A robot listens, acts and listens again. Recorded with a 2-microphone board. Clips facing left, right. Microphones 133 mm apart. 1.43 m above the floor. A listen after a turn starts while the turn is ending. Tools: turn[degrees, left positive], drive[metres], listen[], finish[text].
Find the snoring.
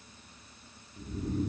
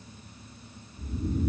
Thought: The snoring: about 60° left or 120° left.
Action: turn[60]
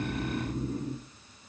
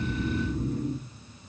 Thought: So it is at 45° left.
Action: turn[45]
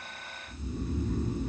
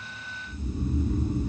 Thought: The snoring is now 10° right.
Action: turn[-10]
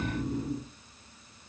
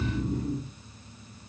Action: finish[Found it: snoring, straight ahead.]